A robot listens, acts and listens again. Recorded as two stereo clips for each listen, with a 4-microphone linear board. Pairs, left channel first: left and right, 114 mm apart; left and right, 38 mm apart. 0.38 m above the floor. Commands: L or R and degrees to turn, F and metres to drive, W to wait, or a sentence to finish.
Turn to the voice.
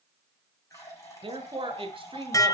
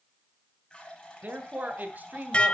R50
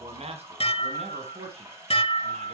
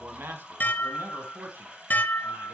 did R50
R65
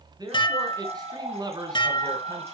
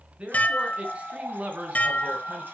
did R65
R35
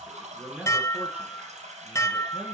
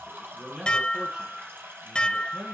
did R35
R10
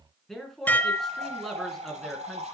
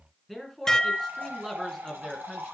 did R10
Facing the man speaking.